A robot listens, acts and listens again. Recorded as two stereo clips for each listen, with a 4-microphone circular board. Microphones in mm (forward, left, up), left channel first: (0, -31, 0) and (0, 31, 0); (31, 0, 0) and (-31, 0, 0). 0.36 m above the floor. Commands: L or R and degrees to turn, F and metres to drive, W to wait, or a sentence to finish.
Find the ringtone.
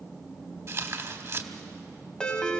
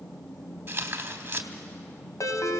R15
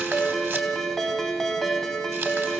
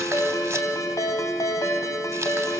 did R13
Found it: a ringtone, straight ahead, 1 to 2 m away.